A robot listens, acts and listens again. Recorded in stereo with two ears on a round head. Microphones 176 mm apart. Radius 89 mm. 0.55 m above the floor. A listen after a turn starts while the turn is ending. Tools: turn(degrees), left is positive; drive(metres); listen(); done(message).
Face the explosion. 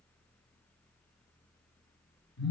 listen()
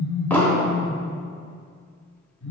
turn(degrees=30)
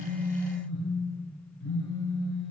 listen()
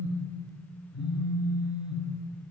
done("I heard an explosion, but can't make it out now. It was about 20° right or 140° left.")